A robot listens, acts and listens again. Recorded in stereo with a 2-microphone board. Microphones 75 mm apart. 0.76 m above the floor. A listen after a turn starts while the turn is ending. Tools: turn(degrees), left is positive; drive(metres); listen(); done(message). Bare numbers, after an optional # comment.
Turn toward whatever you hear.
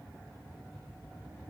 listen()
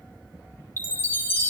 # The chime: about 25° left or 155° left.
turn(25)
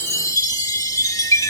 # So it is at 130° left.
turn(130)
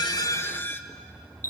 # The chime is now 35° left.
turn(35)
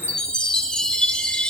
# The chime is now 15° left.
turn(15)
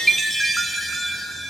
done("Facing the chime.")